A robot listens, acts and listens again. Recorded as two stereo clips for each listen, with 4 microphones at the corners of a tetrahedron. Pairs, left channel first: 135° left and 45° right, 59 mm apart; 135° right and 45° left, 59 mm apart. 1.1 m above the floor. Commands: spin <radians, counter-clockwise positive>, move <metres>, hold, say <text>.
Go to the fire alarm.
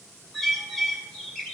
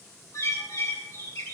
hold
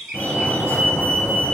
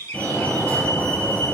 spin 2.97
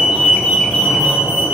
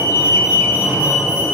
spin -0.26
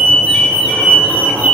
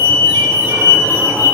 move 1.0
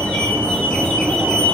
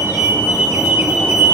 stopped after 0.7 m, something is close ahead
say Blocked. The fire alarm is further on, straight ahead.